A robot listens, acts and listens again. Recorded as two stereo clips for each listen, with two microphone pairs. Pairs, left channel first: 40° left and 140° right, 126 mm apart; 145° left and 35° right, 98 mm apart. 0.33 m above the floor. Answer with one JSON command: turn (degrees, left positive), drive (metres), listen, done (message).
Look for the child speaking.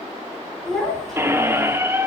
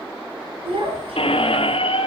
{"turn": -50}
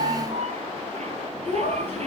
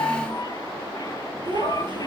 {"done": "Facing the child speaking, 2 to 4 m away."}